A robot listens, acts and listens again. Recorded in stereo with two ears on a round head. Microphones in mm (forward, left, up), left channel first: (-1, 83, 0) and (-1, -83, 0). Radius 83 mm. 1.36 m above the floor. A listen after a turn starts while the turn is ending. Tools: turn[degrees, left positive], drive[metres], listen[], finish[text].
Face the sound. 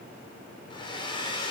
Thought: The hair dryer: about 25° left or 155° left.
Action: turn[25]
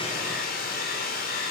Thought: So it is at 130° left.
Action: turn[130]
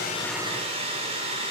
Thought: The hair dryer is now 30° right.
Action: turn[-30]
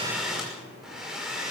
Action: finish[Facing the hair dryer, over 4 m away.]